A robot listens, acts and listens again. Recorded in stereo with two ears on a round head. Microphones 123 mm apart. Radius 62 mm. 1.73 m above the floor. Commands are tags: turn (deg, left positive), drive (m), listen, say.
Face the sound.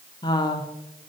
<turn deg="30"/>
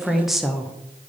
<say>Facing the woman speaking, under 1 m away.</say>